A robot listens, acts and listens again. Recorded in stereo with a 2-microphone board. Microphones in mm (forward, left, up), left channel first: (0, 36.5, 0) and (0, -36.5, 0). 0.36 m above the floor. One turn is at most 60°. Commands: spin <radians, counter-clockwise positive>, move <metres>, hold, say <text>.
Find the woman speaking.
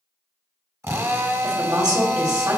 spin -1.05
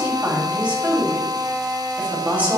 spin -0.44
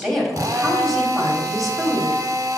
say Found it: a woman speaking, straight ahead, 2 to 4 m away.